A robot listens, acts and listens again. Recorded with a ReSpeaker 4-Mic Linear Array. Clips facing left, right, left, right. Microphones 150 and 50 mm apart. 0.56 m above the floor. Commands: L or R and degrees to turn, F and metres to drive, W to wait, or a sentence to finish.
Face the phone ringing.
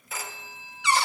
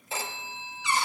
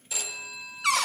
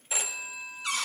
R25
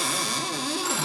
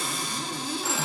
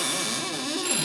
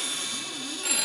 Facing the phone ringing, under 1 m away.